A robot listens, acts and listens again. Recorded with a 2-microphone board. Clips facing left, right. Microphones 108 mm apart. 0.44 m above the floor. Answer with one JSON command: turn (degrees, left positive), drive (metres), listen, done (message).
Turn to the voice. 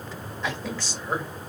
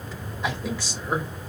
{"turn": -30}
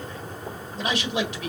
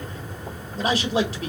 {"turn": -140}
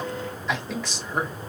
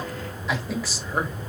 {"turn": -10}
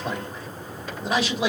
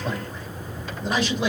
{"done": "Facing the man speaking."}